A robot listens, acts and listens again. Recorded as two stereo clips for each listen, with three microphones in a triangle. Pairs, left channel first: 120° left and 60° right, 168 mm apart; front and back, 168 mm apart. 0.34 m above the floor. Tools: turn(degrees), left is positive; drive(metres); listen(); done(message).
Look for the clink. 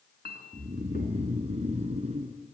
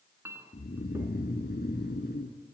turn(degrees=105)
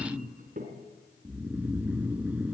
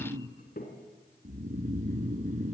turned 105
turn(degrees=-25)
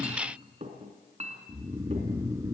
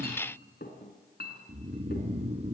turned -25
turn(degrees=-15)
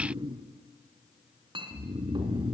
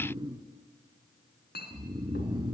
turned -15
done("Found it: a clink, straight ahead.")